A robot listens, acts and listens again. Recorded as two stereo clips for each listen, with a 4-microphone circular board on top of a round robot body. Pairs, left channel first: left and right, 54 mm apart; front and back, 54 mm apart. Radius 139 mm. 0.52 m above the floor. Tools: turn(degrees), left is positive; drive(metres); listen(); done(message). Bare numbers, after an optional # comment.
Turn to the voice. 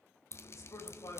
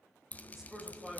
# The man speaking: 100° left.
turn(100)
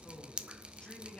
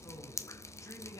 # The man speaking is now 20° left.
turn(20)
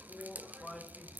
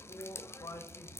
done("Found it: a man speaking, straight ahead, 2 to 4 m away.")